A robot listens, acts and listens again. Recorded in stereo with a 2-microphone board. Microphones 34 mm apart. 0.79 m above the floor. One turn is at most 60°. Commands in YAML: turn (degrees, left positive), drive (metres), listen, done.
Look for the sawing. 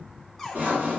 turn: -60
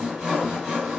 turn: -25
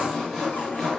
done: "Found it: sawing, straight ahead."